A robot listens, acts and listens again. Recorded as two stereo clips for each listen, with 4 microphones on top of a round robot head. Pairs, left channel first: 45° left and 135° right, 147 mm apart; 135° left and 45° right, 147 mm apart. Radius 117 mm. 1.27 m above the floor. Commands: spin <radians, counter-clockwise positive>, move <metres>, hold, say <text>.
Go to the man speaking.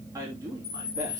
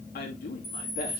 spin 2.71
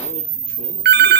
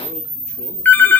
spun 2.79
hold
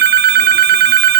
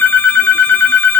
hold
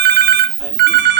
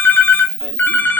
say I heard a man speaking from this way, but can't make it out now. I did not reach it.